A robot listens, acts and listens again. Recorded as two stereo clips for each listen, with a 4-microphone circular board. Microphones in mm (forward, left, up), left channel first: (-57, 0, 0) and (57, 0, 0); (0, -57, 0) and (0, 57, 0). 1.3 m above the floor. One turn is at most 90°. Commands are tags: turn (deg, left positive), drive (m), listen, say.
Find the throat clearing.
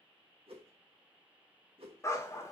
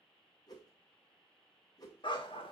<listen/>
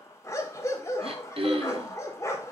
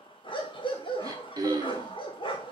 <turn deg="35"/>
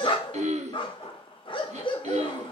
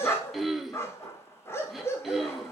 <say>Found it: throat clearing, straight ahead.</say>